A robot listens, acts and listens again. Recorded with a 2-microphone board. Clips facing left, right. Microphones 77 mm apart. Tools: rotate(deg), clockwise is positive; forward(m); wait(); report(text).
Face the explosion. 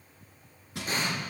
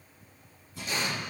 rotate(-40)
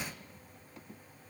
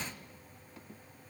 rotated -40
wait()
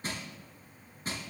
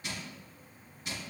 report("I heard an explosion, but can't make it out now. It was about straight ahead or 100° left.")